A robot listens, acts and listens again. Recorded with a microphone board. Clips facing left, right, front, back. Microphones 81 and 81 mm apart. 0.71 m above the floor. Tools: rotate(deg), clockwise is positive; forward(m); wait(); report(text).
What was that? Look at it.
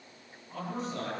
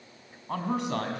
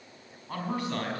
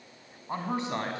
rotate(110)
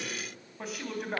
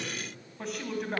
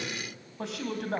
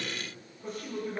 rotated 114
report("Found it: a man speaking, straight ahead.")